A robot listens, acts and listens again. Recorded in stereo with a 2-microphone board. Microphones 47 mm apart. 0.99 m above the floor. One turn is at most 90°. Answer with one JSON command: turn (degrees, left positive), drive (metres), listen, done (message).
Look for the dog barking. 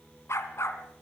{"turn": 70}
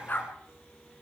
{"turn": 40}
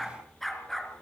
{"done": "Facing the dog barking, over 4 m away."}